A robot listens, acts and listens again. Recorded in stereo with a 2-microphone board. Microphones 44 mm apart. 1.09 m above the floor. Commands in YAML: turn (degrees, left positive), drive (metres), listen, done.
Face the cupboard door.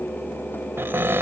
turn: -65
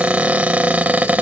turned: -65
turn: -40
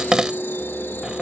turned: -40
turn: -15
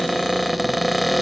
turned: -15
done: "Found it: a cupboard door, straight ahead."